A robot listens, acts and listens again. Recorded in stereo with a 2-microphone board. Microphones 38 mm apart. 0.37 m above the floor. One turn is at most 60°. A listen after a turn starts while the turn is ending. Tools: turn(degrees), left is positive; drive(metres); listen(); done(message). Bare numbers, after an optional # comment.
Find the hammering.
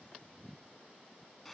listen()
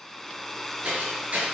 # The hammering: about 40° right or 140° right.
turn(-40)
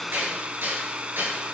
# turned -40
# So it is at 100° right.
turn(-60)
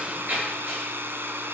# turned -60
# The hammering is now 45° right.
turn(-45)
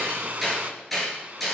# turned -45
done("Facing the hammering.")